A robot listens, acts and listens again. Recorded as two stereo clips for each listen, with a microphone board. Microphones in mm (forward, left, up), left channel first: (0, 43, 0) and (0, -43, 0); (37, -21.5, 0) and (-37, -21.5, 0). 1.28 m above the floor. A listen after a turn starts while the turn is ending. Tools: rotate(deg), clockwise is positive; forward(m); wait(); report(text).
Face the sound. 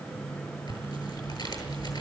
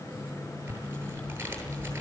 rotate(-115)
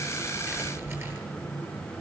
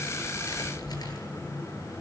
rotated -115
rotate(30)
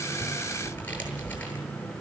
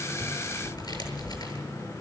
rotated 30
rotate(-20)
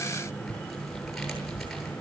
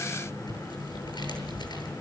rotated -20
report("Found it: tearing paper, straight ahead.")